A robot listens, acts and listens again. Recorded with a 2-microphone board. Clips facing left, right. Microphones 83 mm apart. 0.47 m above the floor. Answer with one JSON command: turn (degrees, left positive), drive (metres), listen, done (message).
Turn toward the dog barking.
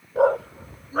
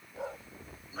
{"turn": 60}
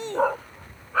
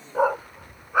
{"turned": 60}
{"turn": -15}
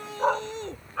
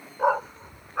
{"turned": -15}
{"turn": -15}
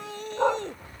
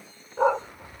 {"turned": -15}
{"turn": -10}
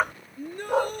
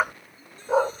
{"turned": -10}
{"turn": -10}
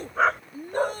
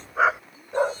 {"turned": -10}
{"turn": -10}
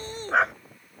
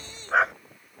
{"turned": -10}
{"done": "Found it: a dog barking, straight ahead."}